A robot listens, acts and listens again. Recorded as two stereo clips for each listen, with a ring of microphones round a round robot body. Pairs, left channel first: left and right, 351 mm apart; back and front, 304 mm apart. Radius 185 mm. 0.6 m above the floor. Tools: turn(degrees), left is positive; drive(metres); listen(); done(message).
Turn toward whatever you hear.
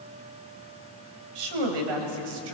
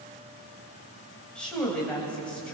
turn(degrees=-95)
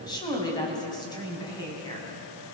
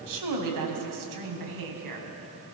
turn(degrees=10)
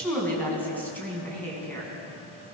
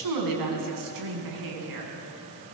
done("Facing the woman speaking, over 4 m away.")